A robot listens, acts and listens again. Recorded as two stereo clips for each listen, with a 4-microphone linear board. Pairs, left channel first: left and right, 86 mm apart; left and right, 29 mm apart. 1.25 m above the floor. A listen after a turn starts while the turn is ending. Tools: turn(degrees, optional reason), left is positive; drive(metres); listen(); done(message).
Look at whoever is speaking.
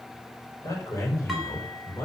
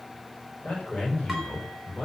turn(degrees=30, reason="The man speaking: about 30° left or 150° left.")
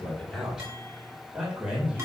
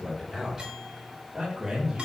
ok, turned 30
turn(degrees=-15, reason="So it is at 15° right.")
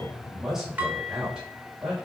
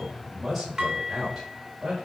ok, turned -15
turn(degrees=-10, reason="The man speaking is now 10° right.")
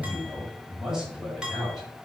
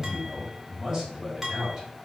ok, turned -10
done("Found it: a man speaking, straight ahead.")